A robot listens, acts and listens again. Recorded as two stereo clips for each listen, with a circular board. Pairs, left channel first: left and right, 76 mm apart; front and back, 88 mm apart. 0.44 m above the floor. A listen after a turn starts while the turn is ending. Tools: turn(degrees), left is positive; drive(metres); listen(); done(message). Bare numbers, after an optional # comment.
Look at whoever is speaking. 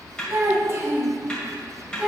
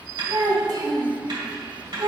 # The child speaking: 160° right.
turn(-160)
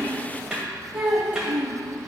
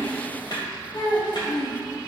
# The child speaking is now 20° right.
turn(-20)
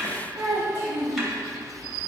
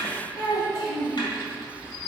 # The child speaking is now 30° right.
turn(-30)
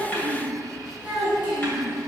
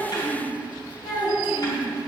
# The child speaking is now 10° right.
turn(-10)
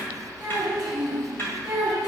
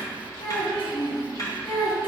done("Found it: a child speaking, straight ahead.")